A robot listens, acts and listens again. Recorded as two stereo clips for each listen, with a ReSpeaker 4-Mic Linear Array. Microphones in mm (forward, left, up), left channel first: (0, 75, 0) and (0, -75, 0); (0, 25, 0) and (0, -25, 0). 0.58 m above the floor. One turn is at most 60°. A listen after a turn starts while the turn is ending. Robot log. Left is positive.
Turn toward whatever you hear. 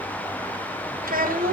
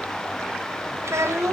note: The child speaking: about 70° right or 110° right.
cmd yaw -60
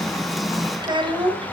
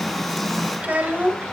note: So it is at 35° right.
cmd yaw -35
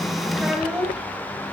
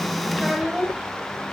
end: Facing the child speaking.